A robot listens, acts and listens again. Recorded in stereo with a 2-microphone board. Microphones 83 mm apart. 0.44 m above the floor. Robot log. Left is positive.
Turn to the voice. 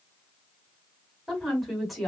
cmd yaw +30
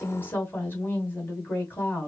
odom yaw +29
note: So it is at 150° left.
cmd yaw +150
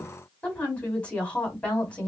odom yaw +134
note: The woman speaking is now 15° left.
cmd yaw +15
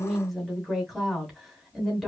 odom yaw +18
end: Facing the woman speaking, 2 to 4 m away.